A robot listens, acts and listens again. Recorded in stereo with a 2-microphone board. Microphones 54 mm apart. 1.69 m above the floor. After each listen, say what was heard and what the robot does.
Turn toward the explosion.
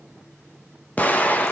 The explosion: about 30° left or 150° left. Turn 30° left.
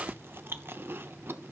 Keep listening.
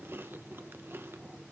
I heard an explosion, but can't make it out now. It was about straight ahead or 120° left.